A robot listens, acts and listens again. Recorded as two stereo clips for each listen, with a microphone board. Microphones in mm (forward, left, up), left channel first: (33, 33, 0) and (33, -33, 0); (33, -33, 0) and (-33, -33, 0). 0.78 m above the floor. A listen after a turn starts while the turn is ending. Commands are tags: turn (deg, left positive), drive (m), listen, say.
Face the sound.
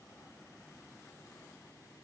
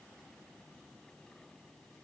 <listen/>
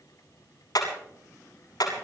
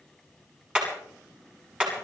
<turn deg="105"/>
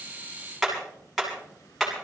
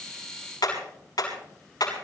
<say>Found it: hammering, straight ahead.</say>